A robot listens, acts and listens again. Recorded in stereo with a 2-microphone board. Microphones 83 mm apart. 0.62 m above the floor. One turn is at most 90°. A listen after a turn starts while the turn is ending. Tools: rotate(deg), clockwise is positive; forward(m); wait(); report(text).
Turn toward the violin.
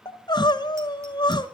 wait()
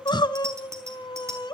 wait()
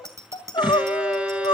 rotate(30)
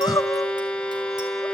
rotate(-15)
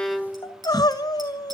report("Facing the violin.")